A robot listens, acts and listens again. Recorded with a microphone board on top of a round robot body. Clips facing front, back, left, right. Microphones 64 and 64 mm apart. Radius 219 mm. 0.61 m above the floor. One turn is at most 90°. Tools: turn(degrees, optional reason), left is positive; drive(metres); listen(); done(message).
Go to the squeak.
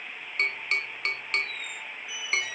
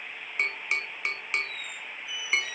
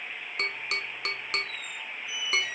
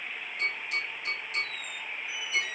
turn(degrees=-45, reason="The squeak: 45° right.")
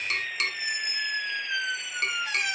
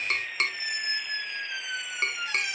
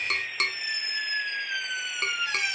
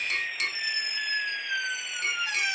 turn(degrees=-25, reason="The squeak is now 25° right.")
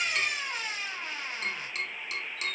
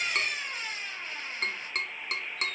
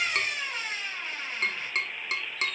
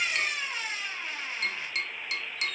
drive(metres=1.0)
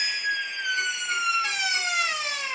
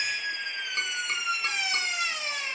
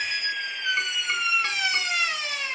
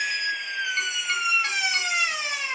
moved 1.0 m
turn(degrees=-15, reason="The squeak is now 15° right.")
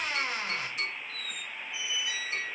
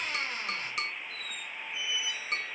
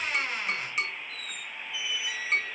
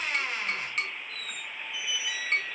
drive(metres=1.0)
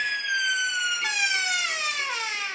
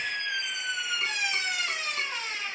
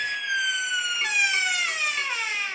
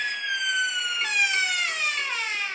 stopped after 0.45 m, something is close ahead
done("Arrived at the squeak, straight ahead.")